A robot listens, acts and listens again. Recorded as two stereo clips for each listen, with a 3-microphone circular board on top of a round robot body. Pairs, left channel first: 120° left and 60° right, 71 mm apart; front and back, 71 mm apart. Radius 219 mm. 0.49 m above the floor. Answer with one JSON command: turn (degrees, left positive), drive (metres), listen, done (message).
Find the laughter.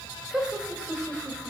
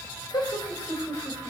{"turn": 20}
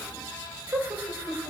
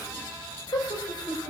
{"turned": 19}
{"done": "Found it: laughter, straight ahead."}